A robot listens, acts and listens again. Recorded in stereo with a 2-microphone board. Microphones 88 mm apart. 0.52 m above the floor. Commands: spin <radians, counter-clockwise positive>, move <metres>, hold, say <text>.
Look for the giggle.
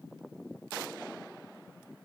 hold
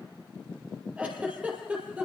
spin -0.52
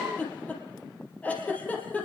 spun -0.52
spin 0.26
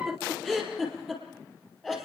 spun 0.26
say Facing the giggle.